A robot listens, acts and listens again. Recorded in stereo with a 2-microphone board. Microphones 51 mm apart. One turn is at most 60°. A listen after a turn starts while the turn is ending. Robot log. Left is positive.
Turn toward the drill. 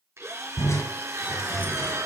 note: The drill: about 65° right or 115° right.
cmd yaw -60
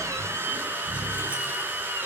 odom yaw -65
note: So it is at 40° right.
cmd yaw -40
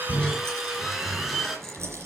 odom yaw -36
end: Found it: a drill, straight ahead.